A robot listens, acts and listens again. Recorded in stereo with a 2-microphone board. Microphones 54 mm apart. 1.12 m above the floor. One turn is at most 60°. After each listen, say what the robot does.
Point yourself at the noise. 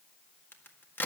Turn 40° left.
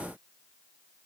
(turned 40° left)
Keep listening.
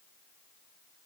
I heard a crack, but can't make it out now. It was about straight ahead or 100° left.